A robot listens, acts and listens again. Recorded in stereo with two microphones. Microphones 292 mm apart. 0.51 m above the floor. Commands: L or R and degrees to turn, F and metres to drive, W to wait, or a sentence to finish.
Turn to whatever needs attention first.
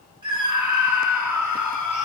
R70
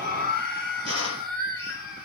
R30
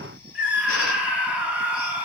Found it: a scream, straight ahead, 2 to 4 m away.